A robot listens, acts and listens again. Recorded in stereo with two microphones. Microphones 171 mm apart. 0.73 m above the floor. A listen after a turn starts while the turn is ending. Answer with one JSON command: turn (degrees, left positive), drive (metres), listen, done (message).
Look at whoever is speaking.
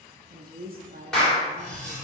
{"turn": -60}
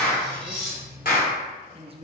{"turn": -40}
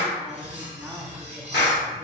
{"listen": true}
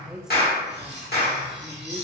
{"done": "Facing the woman speaking."}